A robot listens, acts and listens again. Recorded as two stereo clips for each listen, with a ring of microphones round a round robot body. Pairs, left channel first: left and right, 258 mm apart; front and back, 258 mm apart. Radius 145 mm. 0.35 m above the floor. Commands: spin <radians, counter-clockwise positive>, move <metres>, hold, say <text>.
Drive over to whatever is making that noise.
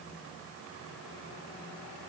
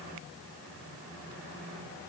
hold
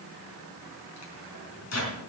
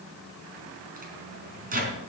spin 2.18
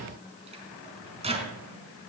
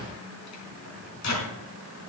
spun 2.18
spin -0.44
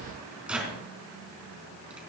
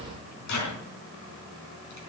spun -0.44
move 1.0
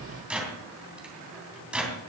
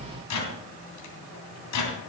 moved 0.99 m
move 1.0
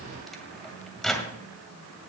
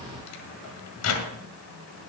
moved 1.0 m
move 1.0
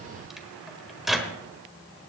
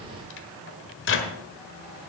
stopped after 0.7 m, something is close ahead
say I am next to the microwave.